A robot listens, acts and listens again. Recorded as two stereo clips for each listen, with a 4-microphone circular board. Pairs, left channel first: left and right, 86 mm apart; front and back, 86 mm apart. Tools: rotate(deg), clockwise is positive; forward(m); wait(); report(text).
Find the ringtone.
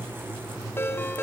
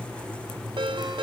rotate(-155)
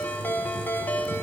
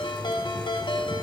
rotate(-25)
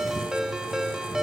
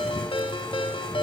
report("Found it: a ringtone, straight ahead, 1 to 2 m away.")